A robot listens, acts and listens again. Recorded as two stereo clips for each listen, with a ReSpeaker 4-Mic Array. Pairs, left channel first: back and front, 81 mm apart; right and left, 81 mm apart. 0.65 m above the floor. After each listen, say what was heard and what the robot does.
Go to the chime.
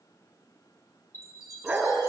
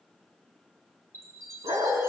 The chime: 135° left. Turn 135° left.
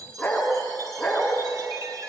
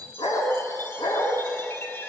The chime is now 35° right. Turn 35° right.
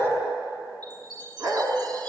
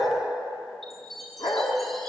Drive 1.0 m forward.
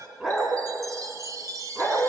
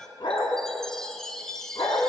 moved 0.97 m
The chime is now 10° right. Turn 10° right.
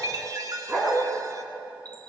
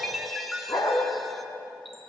Drive 1.0 m forward.
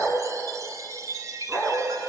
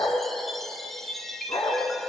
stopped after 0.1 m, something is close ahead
Arrived at the chime, straight ahead.